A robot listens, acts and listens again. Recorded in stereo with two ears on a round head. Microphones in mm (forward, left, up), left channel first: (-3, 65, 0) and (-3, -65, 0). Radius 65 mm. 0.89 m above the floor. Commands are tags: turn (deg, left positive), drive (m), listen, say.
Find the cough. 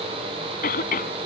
<turn deg="65"/>
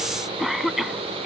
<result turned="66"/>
<say>Facing the cough.</say>